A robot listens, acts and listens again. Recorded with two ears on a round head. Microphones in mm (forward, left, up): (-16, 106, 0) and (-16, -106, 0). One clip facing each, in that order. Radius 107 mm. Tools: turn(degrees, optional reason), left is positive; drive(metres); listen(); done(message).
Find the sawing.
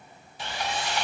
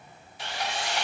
turn(degrees=75, reason="The sawing: about 75° left or 105° left.")
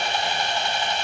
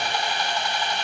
turn(degrees=25, reason="So it is at 25° left.")
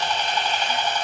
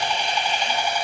turn(degrees=-10, reason="The sawing is now 10° right.")
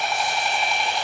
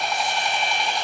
done("Facing the sawing, 1 to 2 m away.")